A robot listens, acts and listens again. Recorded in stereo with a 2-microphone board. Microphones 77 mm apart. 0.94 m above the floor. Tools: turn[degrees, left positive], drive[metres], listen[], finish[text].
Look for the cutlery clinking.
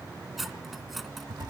Action: turn[30]
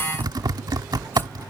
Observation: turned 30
Action: listen[]
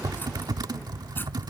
Action: listen[]
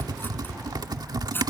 Thought: So it is at 150° left.
Action: turn[150]
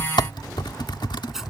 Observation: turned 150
Action: finish[Facing the cutlery clinking.]